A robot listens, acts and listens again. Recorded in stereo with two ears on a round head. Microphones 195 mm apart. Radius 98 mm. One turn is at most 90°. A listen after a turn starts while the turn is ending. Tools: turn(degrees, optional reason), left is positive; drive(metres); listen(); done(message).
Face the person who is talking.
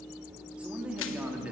turn(degrees=-30)
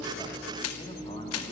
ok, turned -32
listen()
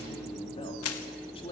turn(degrees=25, reason="So it is at 25° left.")
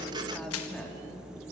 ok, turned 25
listen()
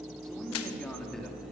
done("Facing the man speaking, 2 to 4 m away.")